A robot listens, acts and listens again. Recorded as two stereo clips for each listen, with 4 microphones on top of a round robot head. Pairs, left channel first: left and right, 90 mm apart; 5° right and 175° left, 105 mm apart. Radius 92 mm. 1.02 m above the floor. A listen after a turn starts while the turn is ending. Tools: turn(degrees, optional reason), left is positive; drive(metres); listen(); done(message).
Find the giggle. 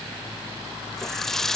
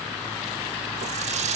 listen()
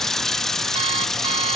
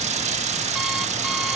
listen()
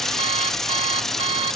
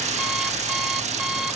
done("I can't make out a giggle, only an alarm clock and a running tap.")